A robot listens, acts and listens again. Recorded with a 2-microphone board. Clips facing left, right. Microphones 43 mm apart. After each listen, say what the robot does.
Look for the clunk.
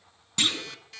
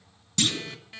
Turn 20° left.
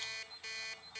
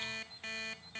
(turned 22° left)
Keep listening.
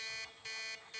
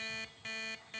I heard a clunk, but can't make it out now. It was about straight ahead or 135° left.